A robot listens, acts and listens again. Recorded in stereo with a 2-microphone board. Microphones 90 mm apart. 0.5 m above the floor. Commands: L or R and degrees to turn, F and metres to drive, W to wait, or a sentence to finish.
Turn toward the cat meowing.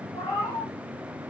L90
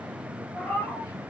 L15
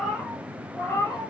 L30
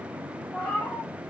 L20
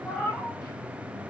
L15
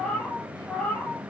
L10
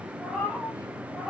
Found it: a cat meowing, straight ahead, 2 to 4 m away.